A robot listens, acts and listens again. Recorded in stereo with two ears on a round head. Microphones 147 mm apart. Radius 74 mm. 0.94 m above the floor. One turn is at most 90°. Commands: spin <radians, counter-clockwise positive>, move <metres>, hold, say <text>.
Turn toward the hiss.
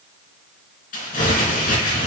hold
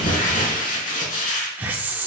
spin -0.52
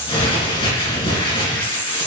spin 0.26
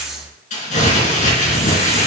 say Facing the hiss, 1 to 2 m away.